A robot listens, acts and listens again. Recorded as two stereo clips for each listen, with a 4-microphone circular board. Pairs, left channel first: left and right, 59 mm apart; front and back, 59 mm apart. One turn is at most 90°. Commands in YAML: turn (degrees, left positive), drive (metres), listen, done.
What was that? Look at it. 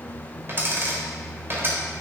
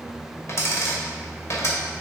turn: -40
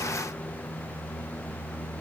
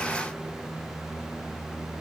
done: "Facing where the dropped coin came from. I can't hear it now."